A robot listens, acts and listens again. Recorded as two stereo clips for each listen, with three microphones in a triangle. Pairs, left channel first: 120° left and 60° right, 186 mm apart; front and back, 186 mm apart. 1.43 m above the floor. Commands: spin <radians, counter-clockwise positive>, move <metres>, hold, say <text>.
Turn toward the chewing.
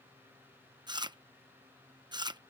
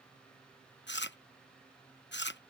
say Found it: chewing, straight ahead.